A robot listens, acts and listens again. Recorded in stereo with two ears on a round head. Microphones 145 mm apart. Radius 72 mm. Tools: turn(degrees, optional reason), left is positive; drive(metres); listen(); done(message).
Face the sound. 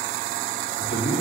turn(degrees=70, reason="The man speaking: about 70° left or 110° left.")
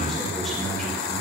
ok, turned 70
done("Found it: a man speaking, straight ahead.")